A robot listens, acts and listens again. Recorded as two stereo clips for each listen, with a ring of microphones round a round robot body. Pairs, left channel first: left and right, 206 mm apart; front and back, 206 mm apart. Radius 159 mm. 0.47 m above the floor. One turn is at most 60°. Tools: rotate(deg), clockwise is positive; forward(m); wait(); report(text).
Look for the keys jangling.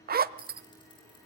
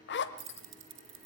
rotate(-60)
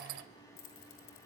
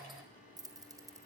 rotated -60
rotate(-60)
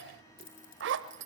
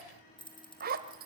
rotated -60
rotate(-60)
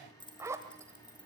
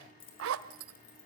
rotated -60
rotate(-20)
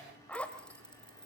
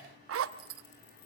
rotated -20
wait()
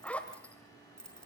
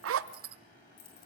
report("Facing the keys jangling, over 4 m away.")